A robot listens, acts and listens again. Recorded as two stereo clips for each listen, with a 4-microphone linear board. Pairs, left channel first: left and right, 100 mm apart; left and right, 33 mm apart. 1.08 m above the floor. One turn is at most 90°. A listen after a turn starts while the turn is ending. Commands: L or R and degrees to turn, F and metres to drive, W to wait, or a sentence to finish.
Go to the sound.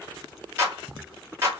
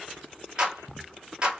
R25
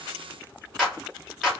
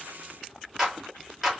F1.0
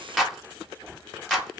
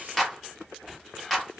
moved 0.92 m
F1.0
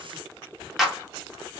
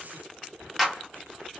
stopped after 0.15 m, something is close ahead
Arrived at the clap, straight ahead.